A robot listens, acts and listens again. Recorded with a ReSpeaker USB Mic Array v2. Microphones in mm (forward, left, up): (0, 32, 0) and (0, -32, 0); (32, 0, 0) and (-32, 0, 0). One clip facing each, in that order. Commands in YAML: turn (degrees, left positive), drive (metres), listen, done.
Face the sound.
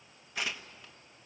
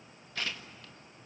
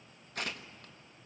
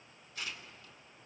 turn: 15
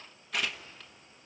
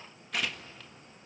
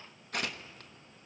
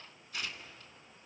done: "Found it: tearing paper, straight ahead, 1 to 2 m away."